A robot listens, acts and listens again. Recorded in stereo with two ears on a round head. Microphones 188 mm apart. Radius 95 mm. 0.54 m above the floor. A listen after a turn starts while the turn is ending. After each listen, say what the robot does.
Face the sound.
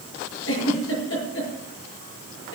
Turn 60° left.
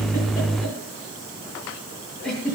Found it: a giggle, straight ahead.